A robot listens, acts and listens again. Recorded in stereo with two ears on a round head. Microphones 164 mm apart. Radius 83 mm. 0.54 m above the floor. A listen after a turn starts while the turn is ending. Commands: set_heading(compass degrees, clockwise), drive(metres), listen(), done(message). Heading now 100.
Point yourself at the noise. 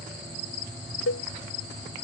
set_heading(10)
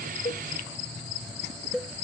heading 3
done("Facing the cowbell.")